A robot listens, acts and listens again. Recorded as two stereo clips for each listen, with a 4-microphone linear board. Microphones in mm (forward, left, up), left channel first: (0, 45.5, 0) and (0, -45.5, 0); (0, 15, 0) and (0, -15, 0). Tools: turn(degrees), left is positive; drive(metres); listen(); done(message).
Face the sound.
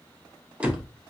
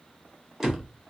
turn(degrees=-30)
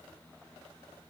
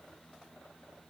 listen()
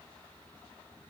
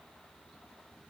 done("I heard a door slam, but can't make it out now. It was about 15° left or 135° right.")